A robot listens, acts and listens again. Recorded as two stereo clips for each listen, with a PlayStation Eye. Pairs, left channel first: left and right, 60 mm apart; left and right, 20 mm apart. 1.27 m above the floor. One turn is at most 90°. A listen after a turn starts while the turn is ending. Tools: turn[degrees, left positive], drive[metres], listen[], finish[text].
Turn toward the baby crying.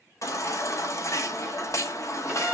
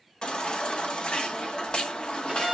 Thought: The baby crying: about 55° left or 125° left.
Action: turn[55]
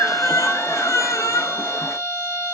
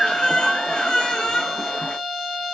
Thought: So it is at 65° left.
Action: turn[65]
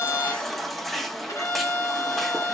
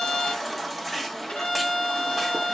Action: finish[Facing the baby crying, under 1 m away.]